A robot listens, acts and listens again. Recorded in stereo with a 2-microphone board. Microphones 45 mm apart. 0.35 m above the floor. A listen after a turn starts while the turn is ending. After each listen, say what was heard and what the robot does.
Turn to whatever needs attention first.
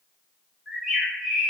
Keep listening.
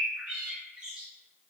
Keep listening.
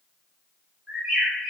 I can't make out anything urgent, only a bird.